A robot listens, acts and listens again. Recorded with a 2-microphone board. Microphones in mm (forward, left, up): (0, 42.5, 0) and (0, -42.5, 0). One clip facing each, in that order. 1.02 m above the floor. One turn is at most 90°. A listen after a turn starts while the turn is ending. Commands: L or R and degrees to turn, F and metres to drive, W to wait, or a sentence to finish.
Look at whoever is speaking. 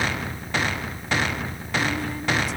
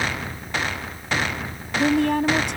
R70
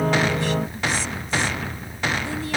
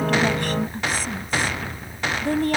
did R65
R50
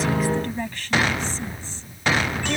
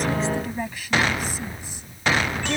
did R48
R10
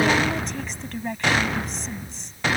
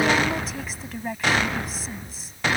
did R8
Facing the woman speaking.